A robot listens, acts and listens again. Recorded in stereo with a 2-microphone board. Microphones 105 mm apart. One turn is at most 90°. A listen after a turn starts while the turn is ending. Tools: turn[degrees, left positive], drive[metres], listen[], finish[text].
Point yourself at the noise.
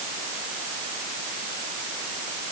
Action: listen[]
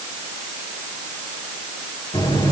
Thought: The buzzer: about 50° left or 130° left.
Action: turn[50]
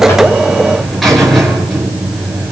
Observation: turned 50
Action: finish[Facing the buzzer, over 4 m away.]